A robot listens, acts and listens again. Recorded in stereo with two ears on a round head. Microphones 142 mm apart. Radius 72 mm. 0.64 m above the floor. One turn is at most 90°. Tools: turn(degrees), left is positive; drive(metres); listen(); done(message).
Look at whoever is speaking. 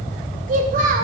turn(degrees=-60)
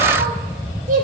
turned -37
turn(degrees=-55)
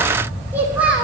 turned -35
done("Found it: a child speaking, straight ahead, 1 to 2 m away.")